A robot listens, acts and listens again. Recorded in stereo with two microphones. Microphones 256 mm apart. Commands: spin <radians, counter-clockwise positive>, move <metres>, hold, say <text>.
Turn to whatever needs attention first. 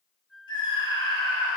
spin 0.35
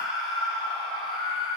say Facing the scream, 2 to 4 m away.